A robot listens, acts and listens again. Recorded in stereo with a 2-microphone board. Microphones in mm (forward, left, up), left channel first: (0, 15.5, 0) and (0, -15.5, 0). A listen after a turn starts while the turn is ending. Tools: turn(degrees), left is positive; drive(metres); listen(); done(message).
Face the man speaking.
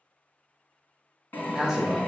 turn(degrees=-30)
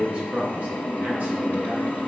turn(degrees=-140)
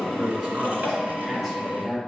done("Facing the man speaking, over 4 m away.")